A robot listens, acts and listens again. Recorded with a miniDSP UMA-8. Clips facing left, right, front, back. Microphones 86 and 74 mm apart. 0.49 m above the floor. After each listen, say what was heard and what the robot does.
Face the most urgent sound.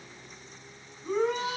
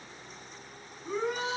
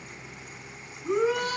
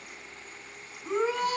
The shout: 125° left. Turn 125° left.
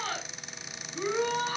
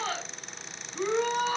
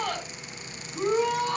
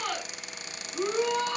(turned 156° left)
The shout is now 30° right. Turn 30° right.
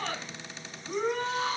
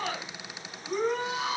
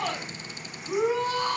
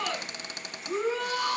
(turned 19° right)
The shout is now 10° right. Turn 10° right.
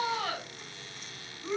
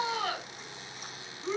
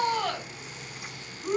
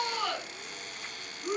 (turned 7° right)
Facing the shout.